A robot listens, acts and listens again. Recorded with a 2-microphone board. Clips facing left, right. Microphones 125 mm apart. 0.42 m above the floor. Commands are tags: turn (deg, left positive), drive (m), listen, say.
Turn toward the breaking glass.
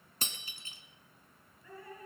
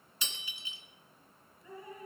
<turn deg="45"/>
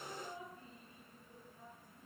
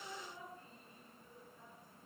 <listen/>
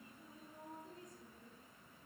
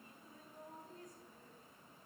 <say>I heard breaking glass, but can't make it out now. It was about straight ahead or 90° left.</say>